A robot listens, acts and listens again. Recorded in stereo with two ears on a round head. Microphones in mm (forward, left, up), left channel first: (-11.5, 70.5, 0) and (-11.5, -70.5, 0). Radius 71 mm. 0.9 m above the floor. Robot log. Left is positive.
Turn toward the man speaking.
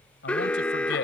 cmd yaw +90
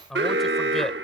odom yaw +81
end: Facing the man speaking.